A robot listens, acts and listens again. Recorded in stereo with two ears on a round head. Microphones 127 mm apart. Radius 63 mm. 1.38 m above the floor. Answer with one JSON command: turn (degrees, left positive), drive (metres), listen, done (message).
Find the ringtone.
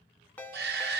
{"turn": 30}
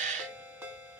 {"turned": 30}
{"turn": -20}
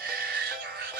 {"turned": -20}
{"listen": true}
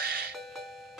{"done": "Found it: a ringtone, straight ahead."}